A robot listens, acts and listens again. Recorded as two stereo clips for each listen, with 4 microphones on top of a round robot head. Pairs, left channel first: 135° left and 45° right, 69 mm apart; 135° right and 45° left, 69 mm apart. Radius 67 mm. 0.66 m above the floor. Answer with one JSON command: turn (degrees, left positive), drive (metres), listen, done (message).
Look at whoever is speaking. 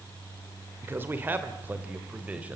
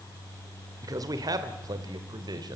{"turn": 25}
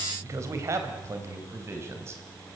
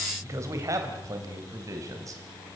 {"done": "Facing the man speaking, 2 to 4 m away."}